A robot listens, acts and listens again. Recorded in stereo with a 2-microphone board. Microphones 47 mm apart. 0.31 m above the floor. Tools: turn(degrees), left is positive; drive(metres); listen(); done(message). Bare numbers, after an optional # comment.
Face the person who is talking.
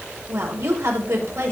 # The woman speaking: about 75° right or 105° right.
turn(-75)
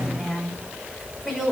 done("Facing the woman speaking.")